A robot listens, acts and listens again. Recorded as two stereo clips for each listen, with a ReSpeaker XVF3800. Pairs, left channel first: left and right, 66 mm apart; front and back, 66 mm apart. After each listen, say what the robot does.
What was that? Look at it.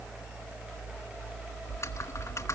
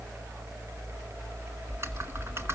Turn 130° left.
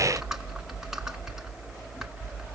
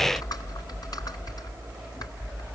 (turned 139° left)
Turn 10° right.
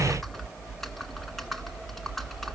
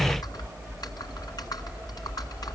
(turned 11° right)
Found it: typing on a keyboard, straight ahead, 1 to 2 m away.